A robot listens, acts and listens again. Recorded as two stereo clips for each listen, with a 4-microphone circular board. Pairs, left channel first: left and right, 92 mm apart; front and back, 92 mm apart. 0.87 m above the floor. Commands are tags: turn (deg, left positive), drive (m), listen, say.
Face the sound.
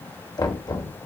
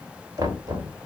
<turn deg="130"/>
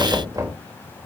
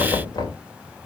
<turn deg="-45"/>
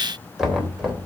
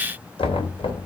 <say>Found it: knocking, straight ahead.</say>